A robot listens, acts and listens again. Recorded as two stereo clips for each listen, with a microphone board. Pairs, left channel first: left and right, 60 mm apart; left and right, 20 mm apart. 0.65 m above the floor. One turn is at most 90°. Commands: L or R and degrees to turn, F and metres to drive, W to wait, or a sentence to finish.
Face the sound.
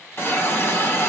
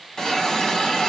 L35
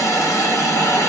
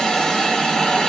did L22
L90
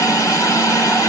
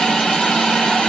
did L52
L70
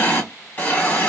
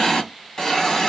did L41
L25
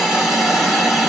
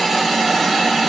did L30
Facing the hiss.